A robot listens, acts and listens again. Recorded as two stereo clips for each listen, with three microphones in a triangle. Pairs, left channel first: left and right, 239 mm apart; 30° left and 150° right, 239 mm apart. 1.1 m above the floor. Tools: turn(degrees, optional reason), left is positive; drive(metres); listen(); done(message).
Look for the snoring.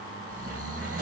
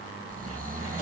turn(degrees=-95, reason="The snoring: 95° right.")
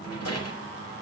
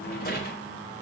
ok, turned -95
listen()
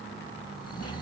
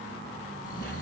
turn(degrees=20, reason="The snoring is now 20° left.")
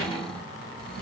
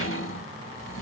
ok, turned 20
listen()
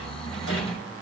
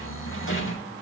done("Found it: snoring, straight ahead.")